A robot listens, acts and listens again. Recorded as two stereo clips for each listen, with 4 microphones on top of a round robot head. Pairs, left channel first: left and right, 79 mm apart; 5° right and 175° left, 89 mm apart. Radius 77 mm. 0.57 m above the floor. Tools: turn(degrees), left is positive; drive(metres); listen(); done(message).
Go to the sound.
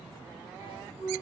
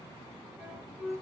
turn(degrees=85)
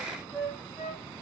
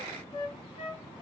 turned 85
turn(degrees=10)
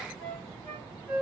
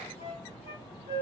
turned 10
drive(metres=1.0)
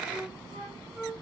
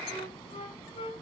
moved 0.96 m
drive(metres=1.0)
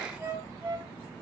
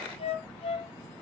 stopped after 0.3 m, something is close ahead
turn(degrees=-15)
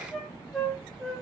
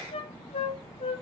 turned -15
done("I am next to the flute.")